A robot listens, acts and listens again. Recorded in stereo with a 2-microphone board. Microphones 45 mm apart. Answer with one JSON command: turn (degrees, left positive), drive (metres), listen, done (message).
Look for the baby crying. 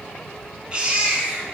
{"turn": -25}
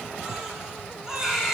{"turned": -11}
{"turn": -15}
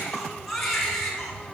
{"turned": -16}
{"done": "Found it: a baby crying, straight ahead, 2 to 4 m away."}